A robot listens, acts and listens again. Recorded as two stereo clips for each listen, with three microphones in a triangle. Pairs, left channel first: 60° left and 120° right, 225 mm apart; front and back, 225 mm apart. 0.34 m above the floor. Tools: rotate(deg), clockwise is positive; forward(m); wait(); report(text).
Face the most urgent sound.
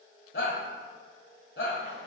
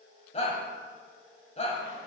rotate(-55)
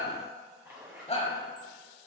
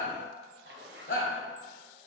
report("Facing the shout, 1 to 2 m away.")